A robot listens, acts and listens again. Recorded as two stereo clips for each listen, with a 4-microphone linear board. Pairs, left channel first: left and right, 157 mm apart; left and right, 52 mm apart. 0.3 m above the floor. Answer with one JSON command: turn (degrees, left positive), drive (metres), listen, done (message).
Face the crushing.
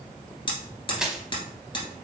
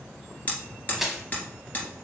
{"turn": -30}
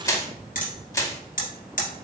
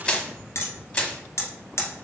{"turn": 25}
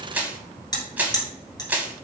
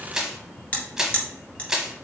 {"turn": -10}
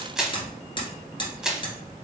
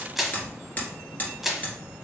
{"done": "Facing the crushing, under 1 m away."}